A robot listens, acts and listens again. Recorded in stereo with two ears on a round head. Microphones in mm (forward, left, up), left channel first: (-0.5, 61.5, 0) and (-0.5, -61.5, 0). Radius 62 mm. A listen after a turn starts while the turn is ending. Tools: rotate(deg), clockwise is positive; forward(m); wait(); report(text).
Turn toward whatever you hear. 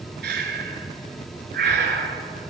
rotate(90)
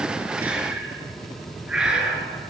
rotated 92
report("Found it: breathing, straight ahead.")